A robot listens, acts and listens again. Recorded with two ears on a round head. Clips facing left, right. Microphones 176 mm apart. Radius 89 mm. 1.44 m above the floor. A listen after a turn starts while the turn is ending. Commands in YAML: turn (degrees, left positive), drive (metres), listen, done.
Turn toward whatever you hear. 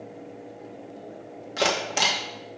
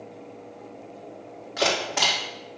turn: 30
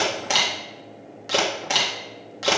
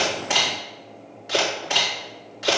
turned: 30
turn: 120
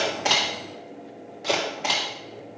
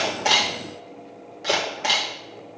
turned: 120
done: "Facing the camera shutter, 2 to 4 m away."